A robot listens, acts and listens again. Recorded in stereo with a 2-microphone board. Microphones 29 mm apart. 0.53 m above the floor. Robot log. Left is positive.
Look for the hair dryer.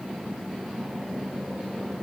cmd idle
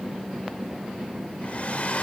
note: The hair dryer: about 50° left or 130° left.
cmd yaw +50
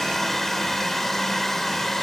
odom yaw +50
note: So it is at 10° left.
cmd yaw +10
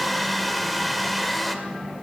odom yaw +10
end: Found it: a hair dryer, straight ahead.